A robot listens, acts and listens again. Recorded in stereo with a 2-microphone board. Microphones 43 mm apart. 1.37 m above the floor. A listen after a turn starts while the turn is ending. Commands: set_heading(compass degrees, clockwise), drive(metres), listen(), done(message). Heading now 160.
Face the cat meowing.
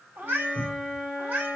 set_heading(200)
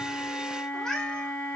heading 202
set_heading(187)
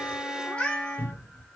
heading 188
set_heading(158)
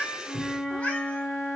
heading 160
set_heading(125)
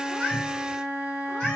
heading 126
listen()
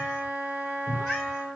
listen()
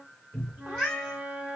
set_heading(111)
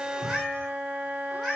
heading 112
done("Facing the cat meowing.")